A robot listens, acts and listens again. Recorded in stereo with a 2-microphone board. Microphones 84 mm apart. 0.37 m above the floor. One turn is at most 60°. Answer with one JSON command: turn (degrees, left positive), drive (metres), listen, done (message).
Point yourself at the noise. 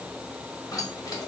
{"turn": 40}
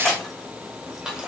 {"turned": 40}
{"turn": -15}
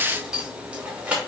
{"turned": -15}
{"turn": -20}
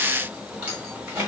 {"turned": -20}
{"turn": -20}
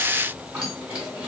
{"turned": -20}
{"turn": -20}
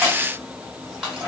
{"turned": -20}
{"done": "Found it: keys jangling, straight ahead, 1 to 2 m away."}